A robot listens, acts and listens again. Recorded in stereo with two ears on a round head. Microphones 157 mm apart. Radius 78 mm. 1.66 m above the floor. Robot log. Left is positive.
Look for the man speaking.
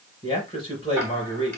note: The man speaking: about 30° left or 150° left.
cmd yaw +30
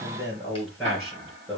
end: Found it: a man speaking, straight ahead, 2 to 4 m away.